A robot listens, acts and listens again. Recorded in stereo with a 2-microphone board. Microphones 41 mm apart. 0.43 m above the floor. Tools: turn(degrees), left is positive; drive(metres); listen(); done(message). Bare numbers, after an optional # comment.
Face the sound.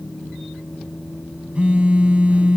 # The phone buzzing: about 30° right or 150° right.
turn(-30)
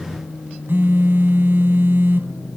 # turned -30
# So it is at 115° right.
turn(-115)
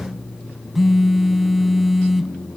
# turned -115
done("Found it: a phone buzzing, straight ahead, under 1 m away.")